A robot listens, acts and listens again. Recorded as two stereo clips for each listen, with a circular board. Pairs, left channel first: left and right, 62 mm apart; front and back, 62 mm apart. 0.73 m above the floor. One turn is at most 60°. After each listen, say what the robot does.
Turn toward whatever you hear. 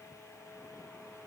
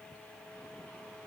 Keep listening.
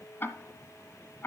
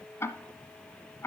Turn 40° left.
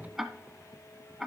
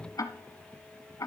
Facing the ticking, 1 to 2 m away.